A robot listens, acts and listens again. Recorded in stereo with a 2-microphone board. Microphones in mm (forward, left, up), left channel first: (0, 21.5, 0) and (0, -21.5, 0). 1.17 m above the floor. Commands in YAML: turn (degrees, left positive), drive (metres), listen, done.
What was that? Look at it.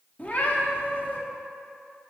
turn: 40
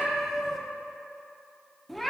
done: "Facing the cat meowing."